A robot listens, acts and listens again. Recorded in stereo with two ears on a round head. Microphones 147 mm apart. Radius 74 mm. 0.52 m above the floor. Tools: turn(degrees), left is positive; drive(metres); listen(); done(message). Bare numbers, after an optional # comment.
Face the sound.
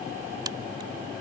# The crack: about 25° right or 155° right.
turn(-25)
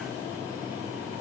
listen()
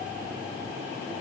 done("I heard a crack, but can't make it out now. It was about straight ahead or 130° right.")